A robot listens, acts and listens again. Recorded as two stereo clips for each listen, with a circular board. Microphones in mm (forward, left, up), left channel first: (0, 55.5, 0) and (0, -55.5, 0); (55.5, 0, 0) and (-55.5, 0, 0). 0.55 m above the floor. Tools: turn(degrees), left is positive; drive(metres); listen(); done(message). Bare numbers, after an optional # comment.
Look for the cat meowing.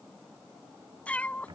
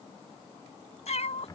# The cat meowing: 15° left.
turn(15)
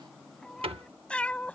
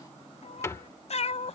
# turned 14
# The cat meowing is now 15° left.
turn(15)
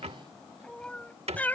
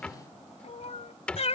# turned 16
# The cat meowing is now 15° left.
turn(15)
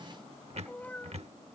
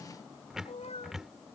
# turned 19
# The cat meowing is now 15° left.
turn(15)
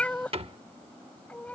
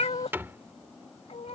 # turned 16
# The cat meowing is now 15° left.
turn(15)
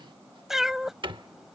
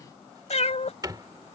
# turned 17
done("Facing the cat meowing.")